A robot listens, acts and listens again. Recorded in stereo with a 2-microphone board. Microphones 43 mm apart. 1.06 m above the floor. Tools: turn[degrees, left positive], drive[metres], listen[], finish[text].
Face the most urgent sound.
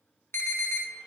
Thought: The alarm: about 65° left or 115° left.
Action: turn[65]
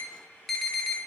Action: finish[Found it: an alarm, straight ahead.]